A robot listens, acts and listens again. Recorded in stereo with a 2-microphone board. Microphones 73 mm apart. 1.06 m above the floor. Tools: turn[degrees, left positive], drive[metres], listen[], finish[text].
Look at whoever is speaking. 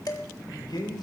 Action: turn[90]
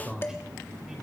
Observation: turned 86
Thought: So it is at 10° right.
Action: turn[-10]
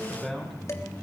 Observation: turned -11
Action: finish[Found it: a man speaking, straight ahead, over 4 m away.]